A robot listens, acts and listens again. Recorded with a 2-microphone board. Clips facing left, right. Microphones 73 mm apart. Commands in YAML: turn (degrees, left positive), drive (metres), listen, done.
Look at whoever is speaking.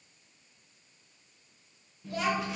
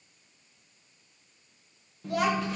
turn: -65
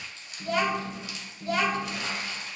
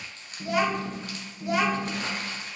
turn: -20
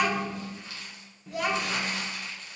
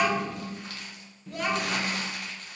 done: "Found it: a child speaking, straight ahead, 1 to 2 m away."